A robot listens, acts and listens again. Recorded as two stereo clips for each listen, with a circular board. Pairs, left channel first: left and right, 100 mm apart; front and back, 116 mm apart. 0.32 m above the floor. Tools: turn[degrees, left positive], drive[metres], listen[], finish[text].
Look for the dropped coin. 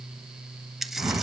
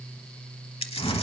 Action: finish[Facing the dropped coin, under 1 m away.]